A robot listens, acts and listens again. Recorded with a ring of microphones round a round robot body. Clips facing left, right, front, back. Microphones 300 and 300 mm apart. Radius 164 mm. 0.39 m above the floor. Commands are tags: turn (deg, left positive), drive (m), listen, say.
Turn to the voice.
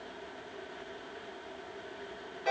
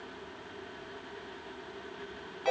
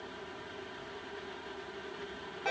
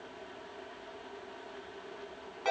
<listen/>
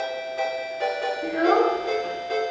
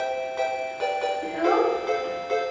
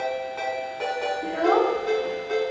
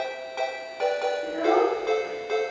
<turn deg="-30"/>
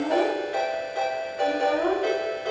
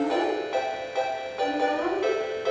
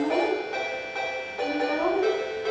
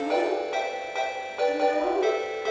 <turn deg="-25"/>
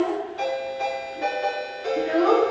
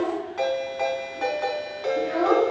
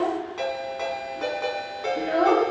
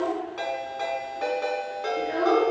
<say>Found it: a child speaking, straight ahead.</say>